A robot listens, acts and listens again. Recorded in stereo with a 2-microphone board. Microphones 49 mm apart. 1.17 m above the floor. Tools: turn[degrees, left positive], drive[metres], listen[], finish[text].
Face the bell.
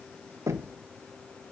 Action: listen[]
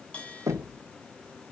Thought: The bell: about 20° left or 160° left.
Action: turn[20]
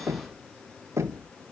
Action: listen[]
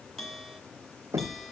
Action: finish[Found it: a bell, straight ahead.]